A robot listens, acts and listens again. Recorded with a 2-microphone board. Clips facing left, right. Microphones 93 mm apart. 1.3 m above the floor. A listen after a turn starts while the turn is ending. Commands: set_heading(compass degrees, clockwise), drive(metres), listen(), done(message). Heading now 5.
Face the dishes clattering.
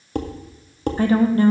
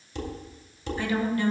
set_heading(315)
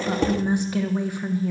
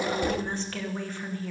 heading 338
listen()
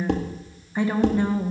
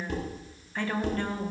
set_heading(233)
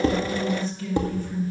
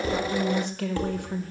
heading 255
set_heading(235)
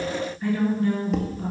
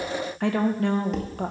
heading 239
listen()
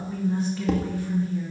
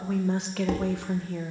listen()
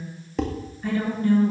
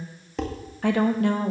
done("Found it: dishes clattering, straight ahead.")